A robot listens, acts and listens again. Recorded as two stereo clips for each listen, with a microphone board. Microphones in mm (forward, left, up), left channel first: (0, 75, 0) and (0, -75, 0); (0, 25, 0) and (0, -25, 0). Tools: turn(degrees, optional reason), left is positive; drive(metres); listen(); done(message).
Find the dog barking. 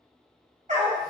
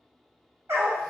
turn(degrees=-55, reason="The dog barking: about 55° right or 125° right.")
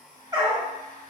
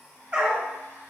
turn(degrees=-25, reason="So it is at 25° right.")
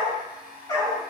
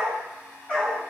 turn(degrees=25, reason="The dog barking is now 25° left.")
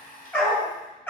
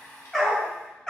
turn(degrees=15, reason="The dog barking is now 15° left.")
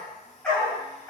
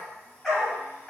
turn(degrees=10, reason="The dog barking is now 10° left.")
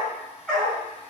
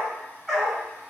done("Found it: a dog barking, straight ahead.")